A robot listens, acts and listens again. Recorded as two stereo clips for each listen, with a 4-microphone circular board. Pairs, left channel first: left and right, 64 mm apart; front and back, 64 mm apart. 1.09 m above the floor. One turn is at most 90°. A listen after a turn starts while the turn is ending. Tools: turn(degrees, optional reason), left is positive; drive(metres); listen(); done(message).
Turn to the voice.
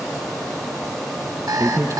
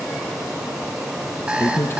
turn(degrees=-45, reason="The man speaking: 45° right.")
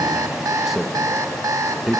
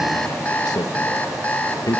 done("Facing the man speaking.")